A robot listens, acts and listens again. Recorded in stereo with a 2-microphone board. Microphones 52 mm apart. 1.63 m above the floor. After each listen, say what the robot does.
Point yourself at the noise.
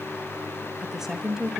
Turn 30° right.
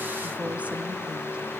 Keep listening.
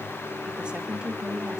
Turn 15° right.
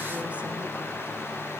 Keep listening.
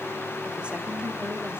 Keep listening.
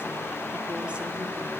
I heard a woman speaking, but can't make it out now. It was about straight ahead or 150° right.